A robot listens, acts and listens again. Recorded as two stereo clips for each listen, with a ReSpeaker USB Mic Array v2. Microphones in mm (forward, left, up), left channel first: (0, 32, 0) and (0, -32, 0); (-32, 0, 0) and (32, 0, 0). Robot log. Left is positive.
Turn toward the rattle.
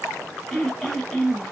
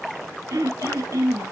cmd idle
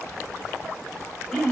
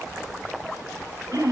cmd idle
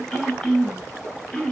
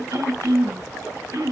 end: I can't make out a rattle to turn to.